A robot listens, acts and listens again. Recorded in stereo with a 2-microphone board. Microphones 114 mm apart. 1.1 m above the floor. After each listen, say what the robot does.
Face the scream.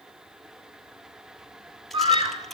Turn 50° right.
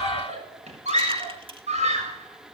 Turn 80° right.
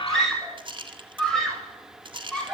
Facing the scream.